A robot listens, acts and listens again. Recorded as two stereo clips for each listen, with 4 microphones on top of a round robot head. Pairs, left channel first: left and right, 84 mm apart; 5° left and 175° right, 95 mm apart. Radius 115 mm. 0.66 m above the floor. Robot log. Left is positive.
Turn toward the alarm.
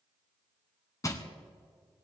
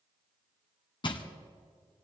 cmd idle
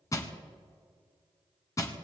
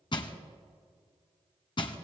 cmd idle
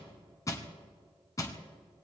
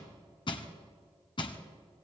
end: I can't make out an alarm, only crushing.